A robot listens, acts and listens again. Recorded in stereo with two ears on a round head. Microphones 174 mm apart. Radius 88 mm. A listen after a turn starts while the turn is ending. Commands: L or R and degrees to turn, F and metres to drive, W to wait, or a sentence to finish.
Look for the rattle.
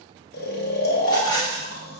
L20
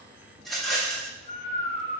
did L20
Facing the rattle, 1 to 2 m away.